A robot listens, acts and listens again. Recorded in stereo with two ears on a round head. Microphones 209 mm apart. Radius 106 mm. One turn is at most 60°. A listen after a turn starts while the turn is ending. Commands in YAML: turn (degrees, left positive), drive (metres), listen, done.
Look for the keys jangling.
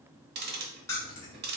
turn: 30
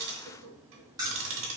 turn: -15
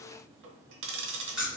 done: "Facing the keys jangling."